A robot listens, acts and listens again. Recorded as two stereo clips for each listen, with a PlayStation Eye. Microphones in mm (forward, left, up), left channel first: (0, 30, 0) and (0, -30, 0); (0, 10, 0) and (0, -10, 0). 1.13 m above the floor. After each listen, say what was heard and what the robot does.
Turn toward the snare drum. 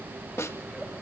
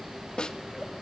The snare drum: about 50° left or 130° left. Turn 50° left.
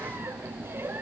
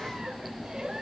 Keep listening.
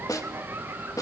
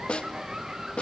So it is at 80° left. Turn 80° left.
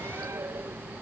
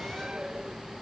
Keep listening.
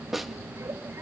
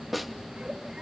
Facing the snare drum.